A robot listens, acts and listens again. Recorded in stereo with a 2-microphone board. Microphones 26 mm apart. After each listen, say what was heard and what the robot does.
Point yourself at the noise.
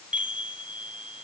The chime: about 55° right or 125° right. Turn 55° right.
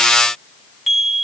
Found it: a chime, straight ahead, 2 to 4 m away.